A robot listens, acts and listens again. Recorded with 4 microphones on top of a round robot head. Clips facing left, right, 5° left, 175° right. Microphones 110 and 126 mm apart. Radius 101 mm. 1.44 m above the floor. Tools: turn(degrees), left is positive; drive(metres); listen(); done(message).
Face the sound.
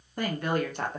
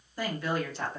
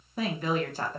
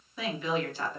turn(degrees=55)
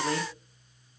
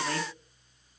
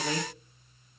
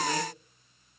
listen()
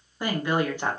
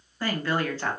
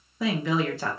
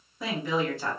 turn(degrees=15)
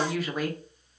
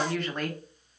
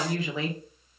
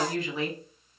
done("Facing the woman speaking, 1 to 2 m away.")